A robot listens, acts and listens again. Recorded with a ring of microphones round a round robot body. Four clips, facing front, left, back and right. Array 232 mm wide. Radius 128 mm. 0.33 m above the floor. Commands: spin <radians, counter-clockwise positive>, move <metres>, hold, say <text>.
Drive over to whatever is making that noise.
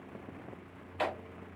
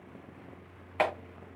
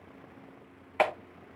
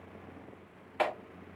spin 2.71
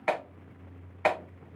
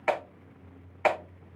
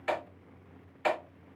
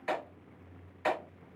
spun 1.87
spin 0.87
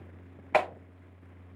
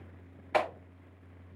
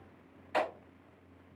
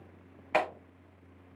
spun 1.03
spin -0.17
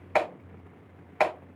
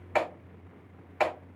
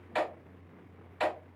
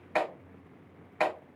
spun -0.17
move 1.0
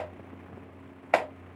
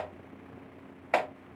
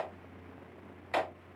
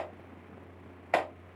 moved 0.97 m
move 1.0
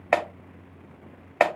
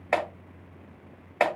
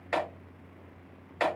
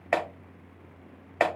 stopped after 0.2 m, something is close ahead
say Arrived at the clap, straight ahead.